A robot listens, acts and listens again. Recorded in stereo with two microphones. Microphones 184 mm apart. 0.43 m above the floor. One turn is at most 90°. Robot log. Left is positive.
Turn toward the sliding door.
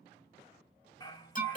cmd idle
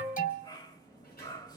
note: The sliding door: about 60° left or 120° left.
cmd yaw +60
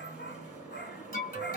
end: Facing the sliding door, 2 to 4 m away.